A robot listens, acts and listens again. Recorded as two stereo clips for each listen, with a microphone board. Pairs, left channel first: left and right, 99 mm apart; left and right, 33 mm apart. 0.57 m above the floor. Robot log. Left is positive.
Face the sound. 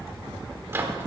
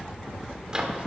note: The microwave: about 25° right or 155° right.
cmd yaw -25
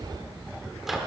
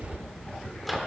end: Facing the microwave, 1 to 2 m away.